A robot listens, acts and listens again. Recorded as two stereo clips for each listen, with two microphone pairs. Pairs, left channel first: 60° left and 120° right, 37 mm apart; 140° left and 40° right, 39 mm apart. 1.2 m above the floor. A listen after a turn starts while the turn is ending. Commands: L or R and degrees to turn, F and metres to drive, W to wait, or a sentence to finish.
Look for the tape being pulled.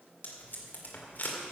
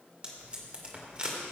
L20
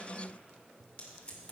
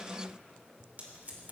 Found it: tape being pulled, straight ahead, 2 to 4 m away.